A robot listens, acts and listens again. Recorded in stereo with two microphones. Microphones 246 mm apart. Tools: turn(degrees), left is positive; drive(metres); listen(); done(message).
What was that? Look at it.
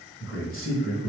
turn(degrees=55)
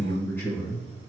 done("Facing the man speaking, 1 to 2 m away.")